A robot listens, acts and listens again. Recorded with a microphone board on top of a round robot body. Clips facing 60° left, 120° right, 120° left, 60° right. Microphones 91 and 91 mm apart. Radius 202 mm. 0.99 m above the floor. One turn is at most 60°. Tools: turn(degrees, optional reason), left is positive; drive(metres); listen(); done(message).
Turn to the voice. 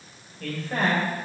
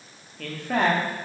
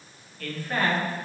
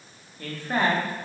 turn(degrees=-60, reason="The man speaking: 130° right.")
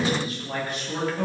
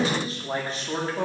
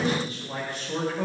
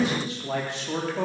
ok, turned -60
turn(degrees=-60, reason="The man speaking is now 60° right.")
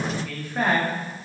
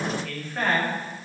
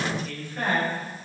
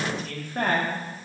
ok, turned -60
turn(degrees=-20, reason="The man speaking is now 20° right.")
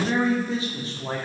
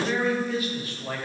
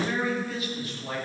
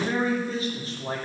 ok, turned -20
done("Facing the man speaking.")